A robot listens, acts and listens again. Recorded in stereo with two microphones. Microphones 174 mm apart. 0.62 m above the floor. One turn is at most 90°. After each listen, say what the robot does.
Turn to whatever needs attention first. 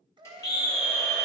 Turn 25° left.
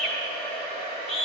Facing the scream.